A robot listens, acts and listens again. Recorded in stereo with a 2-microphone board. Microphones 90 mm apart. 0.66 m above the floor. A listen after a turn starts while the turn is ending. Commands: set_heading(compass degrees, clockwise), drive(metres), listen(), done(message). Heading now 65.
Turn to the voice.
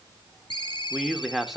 set_heading(35)
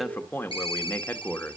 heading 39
set_heading(244)
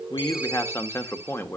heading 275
set_heading(245)
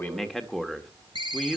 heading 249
done("Found it: a man speaking, straight ahead.")